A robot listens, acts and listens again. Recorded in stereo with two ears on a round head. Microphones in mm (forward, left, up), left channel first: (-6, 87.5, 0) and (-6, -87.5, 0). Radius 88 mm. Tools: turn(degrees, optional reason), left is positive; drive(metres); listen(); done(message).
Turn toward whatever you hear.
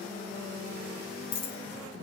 turn(degrees=30, reason="The dropped coin: about 30° left or 150° left.")
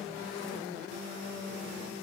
listen()
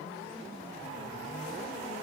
done("I heard a dropped coin, but can't make it out now. It was about straight ahead or 120° left.")